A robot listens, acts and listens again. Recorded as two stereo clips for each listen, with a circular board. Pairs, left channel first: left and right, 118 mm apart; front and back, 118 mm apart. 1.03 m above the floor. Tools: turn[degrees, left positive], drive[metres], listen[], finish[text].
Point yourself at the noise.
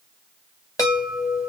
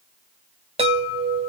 Thought: The chime: 150° left.
Action: turn[150]
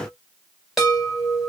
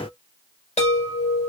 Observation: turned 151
Action: finish[Found it: a chime, straight ahead, 1 to 2 m away.]